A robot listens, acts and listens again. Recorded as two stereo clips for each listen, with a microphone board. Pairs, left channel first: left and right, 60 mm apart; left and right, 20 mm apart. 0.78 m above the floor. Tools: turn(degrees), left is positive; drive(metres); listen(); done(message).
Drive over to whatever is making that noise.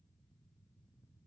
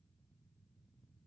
listen()
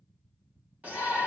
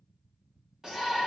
turn(degrees=-25)
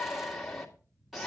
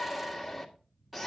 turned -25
drive(metres=1.0)
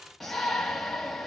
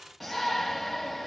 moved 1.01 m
drive(metres=1.0)
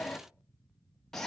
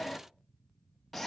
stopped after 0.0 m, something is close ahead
turn(degrees=10)
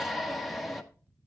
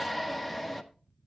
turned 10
done("I am next to the shout.")